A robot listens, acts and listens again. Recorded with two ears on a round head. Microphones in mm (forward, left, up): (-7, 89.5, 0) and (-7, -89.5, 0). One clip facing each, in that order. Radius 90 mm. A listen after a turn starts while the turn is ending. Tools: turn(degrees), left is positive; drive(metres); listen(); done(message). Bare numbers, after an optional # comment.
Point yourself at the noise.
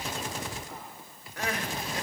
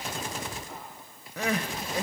turn(-90)
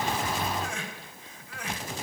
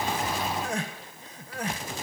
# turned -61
# So it is at 35° right.
turn(-35)
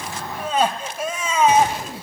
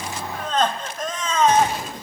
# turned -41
# The crying is now 10° left.
turn(10)
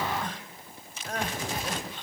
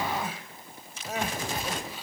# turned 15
done("Found it: crying, straight ahead.")